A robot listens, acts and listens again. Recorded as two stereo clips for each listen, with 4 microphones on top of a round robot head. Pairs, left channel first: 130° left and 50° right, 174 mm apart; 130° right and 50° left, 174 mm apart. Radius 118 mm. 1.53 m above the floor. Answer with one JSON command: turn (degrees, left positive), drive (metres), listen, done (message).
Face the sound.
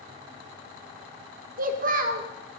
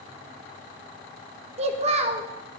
{"done": "Found it: a child speaking, straight ahead."}